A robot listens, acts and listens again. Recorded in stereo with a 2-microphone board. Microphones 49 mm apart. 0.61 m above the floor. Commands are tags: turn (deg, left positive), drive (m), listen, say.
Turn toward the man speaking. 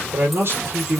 <turn deg="-50"/>
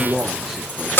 <say>Found it: a man speaking, straight ahead, 1 to 2 m away.</say>